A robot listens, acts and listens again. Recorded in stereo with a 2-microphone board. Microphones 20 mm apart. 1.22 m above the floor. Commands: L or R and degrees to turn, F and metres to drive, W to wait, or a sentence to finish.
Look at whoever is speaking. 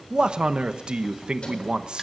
R55
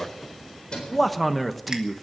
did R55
Facing the man speaking, 1 to 2 m away.